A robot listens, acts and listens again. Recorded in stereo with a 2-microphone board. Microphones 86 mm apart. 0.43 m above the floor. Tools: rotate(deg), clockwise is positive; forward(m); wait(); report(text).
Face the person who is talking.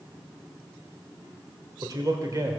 rotate(40)
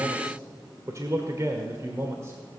rotate(35)
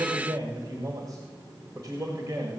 rotate(45)
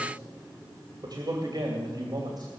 rotate(55)
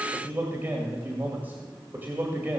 rotate(20)
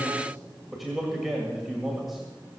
report("Facing the man speaking, 2 to 4 m away.")